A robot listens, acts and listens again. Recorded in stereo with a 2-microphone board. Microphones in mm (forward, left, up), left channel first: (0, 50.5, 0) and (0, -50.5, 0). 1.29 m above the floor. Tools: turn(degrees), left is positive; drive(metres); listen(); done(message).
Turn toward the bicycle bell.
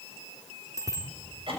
turn(degrees=-35)
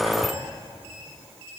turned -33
listen()
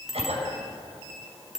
done("Facing the bicycle bell.")